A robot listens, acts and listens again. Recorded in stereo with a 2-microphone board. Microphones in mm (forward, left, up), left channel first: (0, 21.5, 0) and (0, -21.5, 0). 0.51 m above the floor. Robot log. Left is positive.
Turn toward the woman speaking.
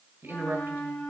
note: The woman speaking: about 70° right or 110° right.
cmd yaw -70
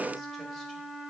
cmd idle
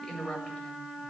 note: So it is at 20° left.
cmd yaw +20
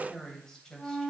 note: The woman speaking is now 15° left.
cmd yaw +15
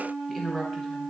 end: Facing the woman speaking.